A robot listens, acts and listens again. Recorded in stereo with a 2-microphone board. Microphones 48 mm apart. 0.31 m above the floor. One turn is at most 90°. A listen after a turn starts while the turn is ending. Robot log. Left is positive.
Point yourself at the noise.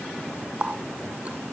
note: The running tap: about 30° right or 150° right.
cmd yaw -30
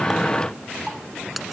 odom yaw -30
end: Facing the running tap.